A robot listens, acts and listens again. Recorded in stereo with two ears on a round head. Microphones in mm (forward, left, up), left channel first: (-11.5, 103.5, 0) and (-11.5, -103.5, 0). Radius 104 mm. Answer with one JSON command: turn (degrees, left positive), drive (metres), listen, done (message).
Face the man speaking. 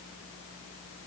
{"listen": true}
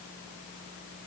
{"listen": true}
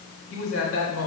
{"turn": 60}
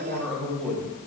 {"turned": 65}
{"done": "Facing the man speaking, 2 to 4 m away."}